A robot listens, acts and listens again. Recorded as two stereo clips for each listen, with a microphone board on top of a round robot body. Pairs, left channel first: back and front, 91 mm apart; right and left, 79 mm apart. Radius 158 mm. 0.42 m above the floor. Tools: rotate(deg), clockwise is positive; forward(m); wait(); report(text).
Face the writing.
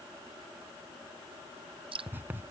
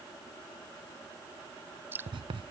rotate(-70)
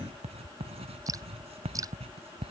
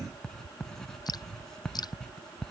report("Found it: writing, straight ahead.")